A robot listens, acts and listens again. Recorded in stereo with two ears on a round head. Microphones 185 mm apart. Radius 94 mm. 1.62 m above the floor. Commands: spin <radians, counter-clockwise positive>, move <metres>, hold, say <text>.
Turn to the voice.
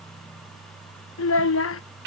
spin 1.22
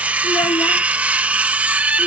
hold
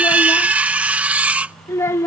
spin 0.26
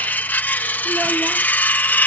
hold
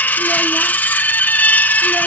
hold
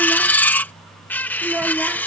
say Found it: a child speaking, straight ahead.